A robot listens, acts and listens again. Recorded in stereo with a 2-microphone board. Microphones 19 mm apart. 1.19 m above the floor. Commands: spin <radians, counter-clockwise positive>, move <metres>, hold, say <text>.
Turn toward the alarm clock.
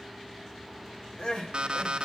spin -0.96
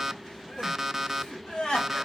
spin -0.26
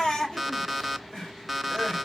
say Facing the alarm clock, under 1 m away.